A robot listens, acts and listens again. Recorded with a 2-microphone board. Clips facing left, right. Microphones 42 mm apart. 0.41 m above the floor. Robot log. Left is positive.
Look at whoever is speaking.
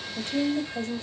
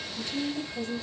note: The woman speaking: about 45° left or 135° left.
cmd yaw +45
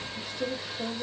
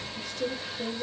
note: So it is at 15° left.
cmd yaw +15
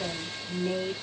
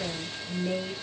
end: Facing the woman speaking.